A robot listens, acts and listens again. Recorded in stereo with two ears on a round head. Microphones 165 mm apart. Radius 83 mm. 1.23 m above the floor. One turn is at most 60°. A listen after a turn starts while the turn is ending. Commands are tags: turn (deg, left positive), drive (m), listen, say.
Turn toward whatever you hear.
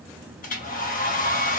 <turn deg="45"/>
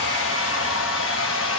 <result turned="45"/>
<turn deg="60"/>
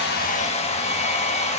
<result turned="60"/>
<turn deg="35"/>
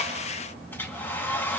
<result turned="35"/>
<turn deg="10"/>
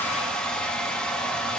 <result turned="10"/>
<say>Found it: a hair dryer, straight ahead, 1 to 2 m away.</say>